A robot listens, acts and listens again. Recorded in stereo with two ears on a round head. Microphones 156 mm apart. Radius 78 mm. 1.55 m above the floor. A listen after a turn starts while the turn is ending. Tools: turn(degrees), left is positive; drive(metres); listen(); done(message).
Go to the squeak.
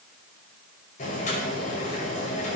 listen()
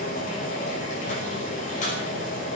listen()
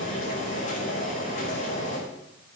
done("I can't make out a squeak to turn to.")